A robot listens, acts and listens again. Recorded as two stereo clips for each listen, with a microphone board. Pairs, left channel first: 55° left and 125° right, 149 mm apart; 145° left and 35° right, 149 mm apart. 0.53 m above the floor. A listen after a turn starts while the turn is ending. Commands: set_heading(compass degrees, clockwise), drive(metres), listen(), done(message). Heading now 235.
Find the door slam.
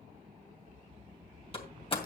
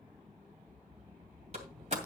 done("Facing the door slam, 2 to 4 m away.")